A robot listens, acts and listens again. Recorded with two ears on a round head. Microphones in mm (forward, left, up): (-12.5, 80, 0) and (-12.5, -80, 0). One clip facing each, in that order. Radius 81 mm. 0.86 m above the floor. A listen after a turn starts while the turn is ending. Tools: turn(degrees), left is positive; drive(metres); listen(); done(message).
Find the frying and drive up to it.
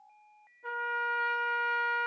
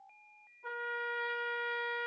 listen()
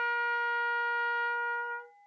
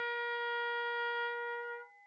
listen()
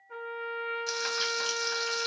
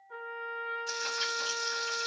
turn(degrees=65)
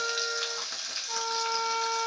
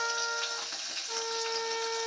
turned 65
turn(degrees=45)
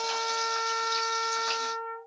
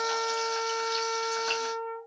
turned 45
drive(metres=1.0)
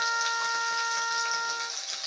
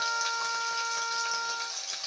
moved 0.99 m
drive(metres=1.0)
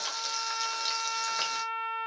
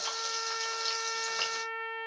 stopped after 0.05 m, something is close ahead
turn(degrees=10)
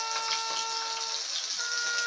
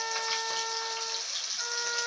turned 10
done("I am next to the frying.")